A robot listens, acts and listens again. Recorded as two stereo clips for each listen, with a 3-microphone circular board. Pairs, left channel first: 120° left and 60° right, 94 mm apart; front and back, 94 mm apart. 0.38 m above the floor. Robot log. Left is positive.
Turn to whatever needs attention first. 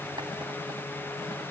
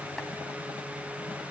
cmd idle
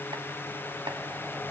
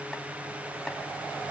cmd idle
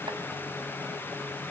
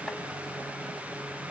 end: I can't make out anything urgent.